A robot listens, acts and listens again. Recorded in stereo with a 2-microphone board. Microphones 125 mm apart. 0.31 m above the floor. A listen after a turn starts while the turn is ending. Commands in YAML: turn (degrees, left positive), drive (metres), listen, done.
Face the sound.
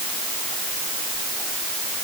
listen: true
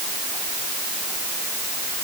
listen: true
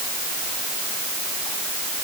done: "I can't make out anything."